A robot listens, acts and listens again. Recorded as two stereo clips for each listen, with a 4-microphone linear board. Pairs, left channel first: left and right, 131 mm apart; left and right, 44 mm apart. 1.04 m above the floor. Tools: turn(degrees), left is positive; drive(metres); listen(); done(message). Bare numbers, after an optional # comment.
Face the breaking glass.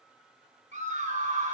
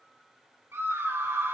listen()
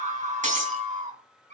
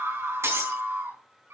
# The breaking glass: about 70° right or 110° right.
turn(-70)
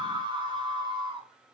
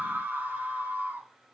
listen()
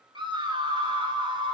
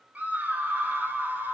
done("I heard breaking glass, but can't make it out now. It was about straight ahead or 40° right.")